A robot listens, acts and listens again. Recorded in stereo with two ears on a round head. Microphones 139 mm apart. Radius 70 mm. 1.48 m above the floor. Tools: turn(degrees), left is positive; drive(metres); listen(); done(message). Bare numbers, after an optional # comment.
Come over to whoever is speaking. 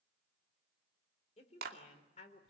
# The woman speaking: about 45° left or 135° left.
turn(45)
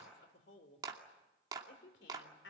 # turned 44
# So it is at 90° left.
turn(90)
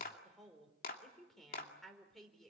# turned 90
drive(1.0)
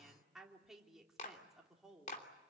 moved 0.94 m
drive(1.0)
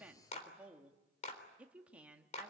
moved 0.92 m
# The woman speaking is now 10° right.
turn(-10)
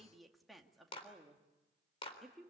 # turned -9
drive(1.0)
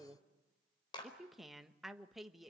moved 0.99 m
drive(1.0)
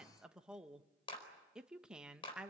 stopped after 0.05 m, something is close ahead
done("Arrived at the woman speaking, straight ahead.")